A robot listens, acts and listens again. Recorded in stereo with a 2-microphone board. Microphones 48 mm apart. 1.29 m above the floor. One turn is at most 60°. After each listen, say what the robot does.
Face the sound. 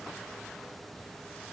Keep listening.
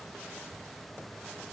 Keep listening.
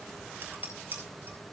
Turn 40° right.
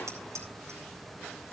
Turn 60° right.
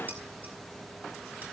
Turn 40° right.
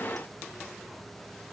Keep listening.
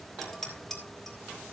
Facing the dishes clattering.